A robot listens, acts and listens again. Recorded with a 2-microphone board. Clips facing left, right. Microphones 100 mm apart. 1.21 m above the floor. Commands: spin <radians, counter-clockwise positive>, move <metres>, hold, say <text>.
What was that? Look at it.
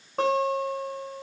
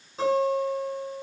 spin 1.05
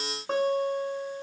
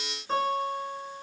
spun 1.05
spin 1.05
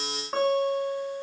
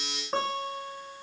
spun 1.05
say Found it: a guitar, straight ahead, 2 to 4 m away.